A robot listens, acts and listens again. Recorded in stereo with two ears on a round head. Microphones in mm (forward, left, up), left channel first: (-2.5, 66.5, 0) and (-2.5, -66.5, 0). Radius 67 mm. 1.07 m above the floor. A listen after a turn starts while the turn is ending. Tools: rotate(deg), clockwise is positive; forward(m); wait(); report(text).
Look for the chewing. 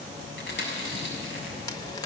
rotate(-90)
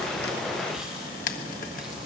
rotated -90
wait()
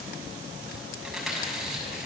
report("Found it: chewing, straight ahead.")